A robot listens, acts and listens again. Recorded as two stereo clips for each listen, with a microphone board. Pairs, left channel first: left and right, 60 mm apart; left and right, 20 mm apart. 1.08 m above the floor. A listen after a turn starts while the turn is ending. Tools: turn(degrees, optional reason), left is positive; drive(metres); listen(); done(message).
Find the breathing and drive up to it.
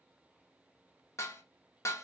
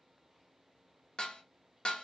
listen()
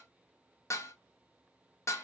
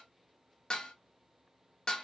listen()
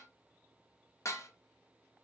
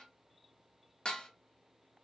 done("I can't make out breathing to turn to.")